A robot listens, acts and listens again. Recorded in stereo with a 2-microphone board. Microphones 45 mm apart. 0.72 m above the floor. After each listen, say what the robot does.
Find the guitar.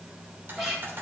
Turn 30° left.
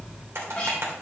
Turn 150° left.
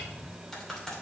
Keep listening.
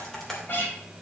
Turn 45° left.
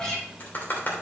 Turn 10° left.
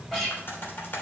Facing the guitar.